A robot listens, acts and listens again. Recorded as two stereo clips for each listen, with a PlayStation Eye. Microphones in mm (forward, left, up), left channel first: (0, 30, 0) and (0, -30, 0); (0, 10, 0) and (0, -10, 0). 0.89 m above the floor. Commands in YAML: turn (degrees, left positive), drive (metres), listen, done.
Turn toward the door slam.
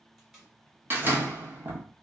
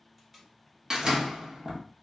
turn: -40
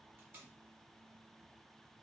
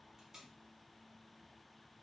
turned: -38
listen: true
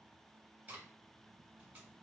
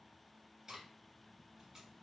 done: "I heard a door slam, but can't make it out now. It was about straight ahead or 105° right."